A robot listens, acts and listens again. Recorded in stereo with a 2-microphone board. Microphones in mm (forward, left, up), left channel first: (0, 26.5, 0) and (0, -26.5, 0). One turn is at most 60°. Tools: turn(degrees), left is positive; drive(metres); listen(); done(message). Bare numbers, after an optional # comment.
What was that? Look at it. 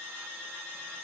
listen()
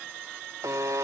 # The buzzer: about 70° right or 110° right.
turn(-60)
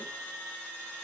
# So it is at 50° right.
turn(-50)
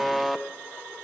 done("Facing the buzzer, 1 to 2 m away.")